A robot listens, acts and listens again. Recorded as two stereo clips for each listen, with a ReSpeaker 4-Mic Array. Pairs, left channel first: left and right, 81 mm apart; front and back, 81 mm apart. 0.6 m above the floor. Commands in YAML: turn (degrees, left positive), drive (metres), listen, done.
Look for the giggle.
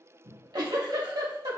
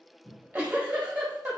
turn: -115
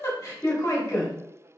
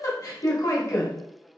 turn: 40
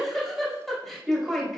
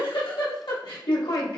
done: "Found it: a giggle, straight ahead, under 1 m away."